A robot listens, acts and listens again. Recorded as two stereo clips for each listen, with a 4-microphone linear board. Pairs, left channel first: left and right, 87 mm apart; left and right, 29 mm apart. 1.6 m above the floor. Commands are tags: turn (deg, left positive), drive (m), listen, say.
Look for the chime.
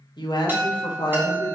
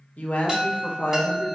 <turn deg="-25"/>
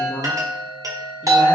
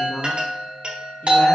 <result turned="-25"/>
<turn deg="-130"/>
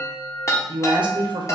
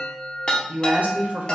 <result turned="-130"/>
<turn deg="45"/>
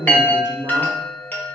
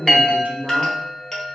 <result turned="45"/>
<turn deg="25"/>
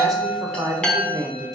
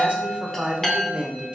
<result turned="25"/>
<turn deg="15"/>
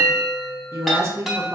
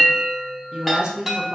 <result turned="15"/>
<say>Facing the chime, under 1 m away.</say>